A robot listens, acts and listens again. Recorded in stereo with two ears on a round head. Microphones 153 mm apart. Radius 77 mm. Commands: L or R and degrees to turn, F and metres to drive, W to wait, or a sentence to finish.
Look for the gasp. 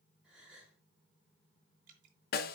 R30
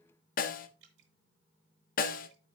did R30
W
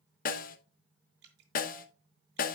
I heard a gasp, but can't make it out now. It was about 25° left or 145° right.